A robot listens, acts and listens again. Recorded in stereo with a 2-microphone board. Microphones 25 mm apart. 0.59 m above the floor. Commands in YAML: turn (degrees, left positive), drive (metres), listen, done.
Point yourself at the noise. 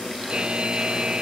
turn: -40
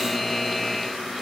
done: "Found it: a buzzer, straight ahead."